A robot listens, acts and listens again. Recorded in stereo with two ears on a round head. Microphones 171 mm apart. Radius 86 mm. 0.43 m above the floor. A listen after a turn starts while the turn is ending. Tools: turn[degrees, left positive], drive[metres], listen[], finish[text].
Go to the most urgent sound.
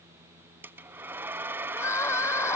Action: turn[30]
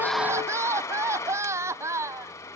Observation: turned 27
Thought: So it is at 15° right.
Action: turn[-15]
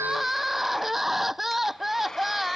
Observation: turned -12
Action: drive[1.0]
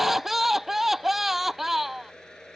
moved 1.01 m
Action: drive[1.0]
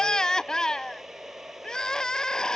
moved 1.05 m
Action: drive[1.0]
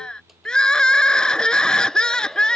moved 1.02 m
Action: drive[1.0]
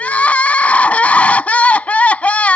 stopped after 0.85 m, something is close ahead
Thought: The crying is now 10° left.
Action: turn[10]
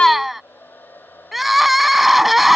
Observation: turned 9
Action: finish[Arrived at the crying, straight ahead.]